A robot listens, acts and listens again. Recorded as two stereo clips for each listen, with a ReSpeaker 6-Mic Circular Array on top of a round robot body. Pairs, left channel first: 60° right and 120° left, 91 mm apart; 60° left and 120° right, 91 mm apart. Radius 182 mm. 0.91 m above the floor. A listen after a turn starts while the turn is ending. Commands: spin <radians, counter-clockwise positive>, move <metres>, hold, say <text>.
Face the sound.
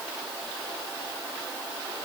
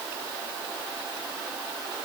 hold
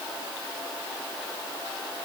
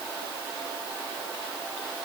hold
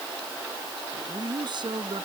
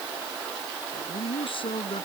spin 1.48
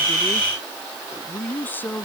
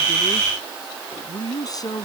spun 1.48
spin 0.17
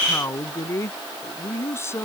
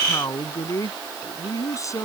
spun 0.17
say Facing the man speaking.